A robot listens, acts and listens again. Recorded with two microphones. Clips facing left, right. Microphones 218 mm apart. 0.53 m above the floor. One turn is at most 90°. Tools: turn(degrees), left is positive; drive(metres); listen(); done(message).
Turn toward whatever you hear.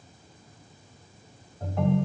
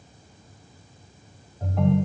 turn(degrees=30)
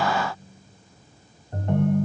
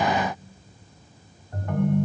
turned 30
turn(degrees=90)
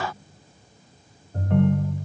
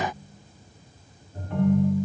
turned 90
turn(degrees=90)
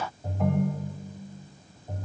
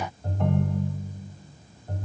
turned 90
done("Facing the ringtone, 1 to 2 m away.")